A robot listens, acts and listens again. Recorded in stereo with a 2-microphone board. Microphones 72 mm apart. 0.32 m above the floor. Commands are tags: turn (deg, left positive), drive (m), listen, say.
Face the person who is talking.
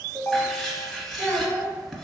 <turn deg="60"/>
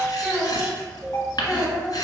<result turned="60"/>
<turn deg="25"/>
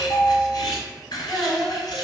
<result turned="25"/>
<turn deg="10"/>
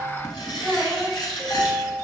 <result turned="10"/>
<say>Found it: a child speaking, straight ahead.</say>